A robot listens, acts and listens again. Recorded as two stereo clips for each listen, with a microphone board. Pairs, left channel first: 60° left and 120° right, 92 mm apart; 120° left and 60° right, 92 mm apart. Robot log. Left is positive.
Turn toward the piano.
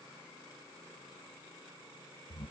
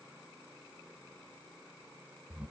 cmd idle
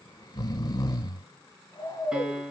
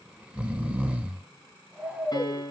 note: The piano: 160° left.
cmd yaw +160
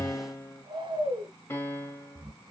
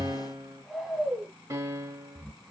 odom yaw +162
end: Found it: a piano, straight ahead.